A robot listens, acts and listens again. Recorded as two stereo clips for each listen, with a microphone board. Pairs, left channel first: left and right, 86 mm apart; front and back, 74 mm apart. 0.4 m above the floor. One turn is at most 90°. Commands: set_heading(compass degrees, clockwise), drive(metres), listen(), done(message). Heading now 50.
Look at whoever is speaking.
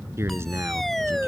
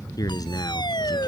set_heading(80)
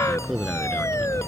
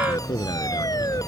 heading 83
done("Facing the man speaking.")